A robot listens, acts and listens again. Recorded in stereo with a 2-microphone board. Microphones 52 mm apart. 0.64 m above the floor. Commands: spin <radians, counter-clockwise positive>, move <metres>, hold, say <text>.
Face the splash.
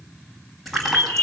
spin 0.52
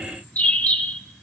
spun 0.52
hold
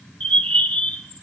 say I heard a splash, but can't make it out now. It was about 30° right or 150° left.